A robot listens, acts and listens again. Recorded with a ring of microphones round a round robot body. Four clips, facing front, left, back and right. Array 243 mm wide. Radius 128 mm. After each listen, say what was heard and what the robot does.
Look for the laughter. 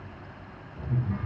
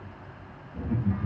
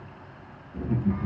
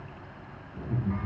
The laughter: 170° left. Turn 170° left.
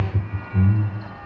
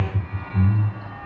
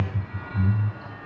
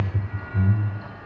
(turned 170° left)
The laughter is now 10° left. Turn 10° left.
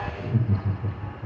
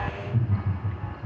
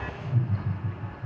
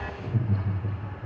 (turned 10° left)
The laughter is now 10° right. Turn 10° right.
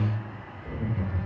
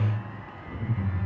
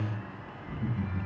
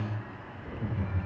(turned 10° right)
Found it: laughter, straight ahead.